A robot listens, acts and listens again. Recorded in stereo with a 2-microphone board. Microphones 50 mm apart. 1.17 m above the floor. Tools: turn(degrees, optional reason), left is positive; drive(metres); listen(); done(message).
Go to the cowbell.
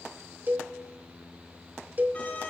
turn(degrees=-35, reason="The cowbell: about 35° right or 145° right.")
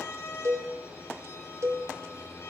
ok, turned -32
turn(degrees=-110, reason="So it is at 110° right.")
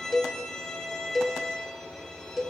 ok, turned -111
drive(metres=1.0)
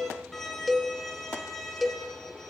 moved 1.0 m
drive(metres=1.0)
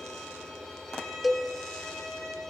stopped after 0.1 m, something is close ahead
done("I am next to the cowbell.")